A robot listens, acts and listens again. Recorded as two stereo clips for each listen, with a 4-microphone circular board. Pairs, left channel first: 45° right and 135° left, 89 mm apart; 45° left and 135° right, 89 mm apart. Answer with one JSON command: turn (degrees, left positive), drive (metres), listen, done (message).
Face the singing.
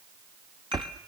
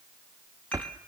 {"listen": true}
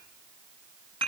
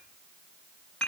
{"listen": true}
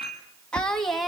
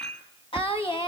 {"turn": 45}
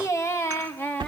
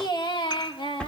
{"turn": 25}
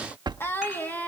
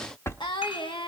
{"turn": 25}
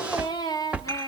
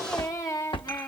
{"turn": -10}
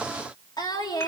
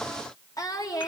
{"done": "Facing the singing, 2 to 4 m away."}